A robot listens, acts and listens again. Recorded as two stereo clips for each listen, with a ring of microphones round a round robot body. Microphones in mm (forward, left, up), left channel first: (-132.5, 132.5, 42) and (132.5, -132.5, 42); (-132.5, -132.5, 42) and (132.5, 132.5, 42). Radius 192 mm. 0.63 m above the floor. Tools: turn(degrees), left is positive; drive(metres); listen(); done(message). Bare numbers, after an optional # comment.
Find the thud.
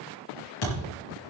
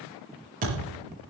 # The thud: 115° left.
turn(115)
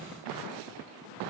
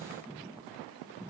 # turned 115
done("I heard a thud from this way, but can't make it out now.")